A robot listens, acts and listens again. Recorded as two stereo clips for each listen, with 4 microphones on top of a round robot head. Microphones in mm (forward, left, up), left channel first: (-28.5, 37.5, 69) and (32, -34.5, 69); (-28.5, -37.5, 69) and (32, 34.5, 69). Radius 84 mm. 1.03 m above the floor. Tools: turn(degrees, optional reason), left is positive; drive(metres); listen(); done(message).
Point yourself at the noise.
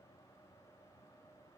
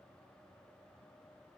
listen()
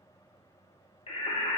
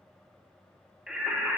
turn(degrees=135, reason="The singing: 135° left.")
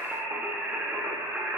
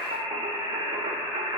turn(degrees=25, reason="The singing is now 25° left.")
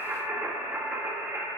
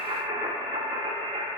turn(degrees=20, reason="The singing is now 20° left.")
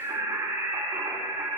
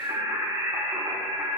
done("Found it: singing, straight ahead, 2 to 4 m away.")